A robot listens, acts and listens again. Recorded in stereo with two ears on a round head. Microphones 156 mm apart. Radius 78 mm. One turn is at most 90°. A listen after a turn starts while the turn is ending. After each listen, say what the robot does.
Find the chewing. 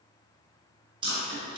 Turn 30° right.
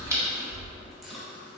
Found it: chewing, straight ahead, 1 to 2 m away.